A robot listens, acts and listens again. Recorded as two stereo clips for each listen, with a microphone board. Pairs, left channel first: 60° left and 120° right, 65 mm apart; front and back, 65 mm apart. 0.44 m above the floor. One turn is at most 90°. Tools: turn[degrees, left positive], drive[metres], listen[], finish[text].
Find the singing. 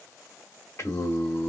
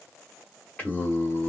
Thought: The singing: 55° left.
Action: turn[55]
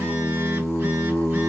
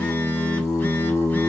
Action: finish[Found it: singing, straight ahead.]